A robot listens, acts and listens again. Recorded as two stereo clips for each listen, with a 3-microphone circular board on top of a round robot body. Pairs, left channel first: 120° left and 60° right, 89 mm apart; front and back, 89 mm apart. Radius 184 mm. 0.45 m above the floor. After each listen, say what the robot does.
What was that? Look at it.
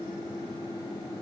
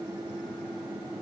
Keep listening.
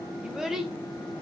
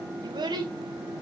Turn 150° right.
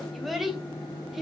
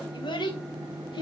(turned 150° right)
Turn 25° left.
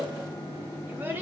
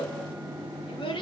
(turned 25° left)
Found it: a child speaking, straight ahead, 2 to 4 m away.